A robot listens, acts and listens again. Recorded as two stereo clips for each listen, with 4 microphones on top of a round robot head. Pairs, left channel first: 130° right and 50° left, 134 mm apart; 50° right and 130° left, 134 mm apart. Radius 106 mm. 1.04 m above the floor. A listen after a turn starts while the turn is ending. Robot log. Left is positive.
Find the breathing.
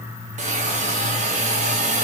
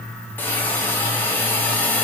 cmd idle
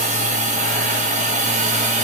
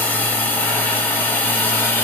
cmd idle
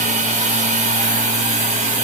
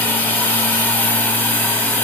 end: I can't make out breathing to turn to.